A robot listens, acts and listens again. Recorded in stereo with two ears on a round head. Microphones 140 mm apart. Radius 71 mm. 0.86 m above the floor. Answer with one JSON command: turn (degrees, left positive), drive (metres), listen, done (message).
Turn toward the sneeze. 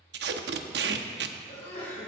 {"turn": 45}
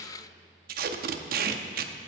{"listen": true}
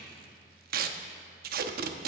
{"done": "I heard a sneeze, but can't make it out now. It was about straight ahead or 90° left."}